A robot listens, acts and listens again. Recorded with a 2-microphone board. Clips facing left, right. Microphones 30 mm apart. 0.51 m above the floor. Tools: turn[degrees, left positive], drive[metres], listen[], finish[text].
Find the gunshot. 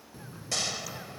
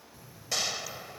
Action: turn[-30]
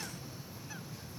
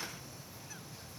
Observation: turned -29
Action: listen[]
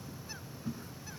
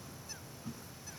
Action: finish[I heard a gunshot, but can't make it out now. It was about 25° left or 145° right.]